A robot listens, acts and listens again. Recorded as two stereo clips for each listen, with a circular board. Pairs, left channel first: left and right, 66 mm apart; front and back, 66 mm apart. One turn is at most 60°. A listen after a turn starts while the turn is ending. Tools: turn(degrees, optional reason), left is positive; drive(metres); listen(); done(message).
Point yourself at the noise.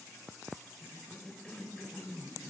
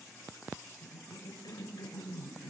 turn(degrees=15, reason="The cough: 15° left.")
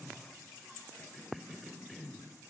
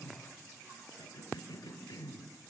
done("Found it: a cough, straight ahead, over 4 m away.")